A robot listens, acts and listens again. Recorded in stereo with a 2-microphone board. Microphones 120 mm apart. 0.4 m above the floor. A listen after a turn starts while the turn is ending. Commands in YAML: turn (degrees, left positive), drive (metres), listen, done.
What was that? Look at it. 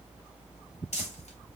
turn: 70
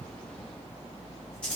turn: 10
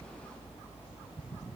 listen: true
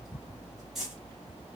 done: "Found it: crumpling, straight ahead, 1 to 2 m away."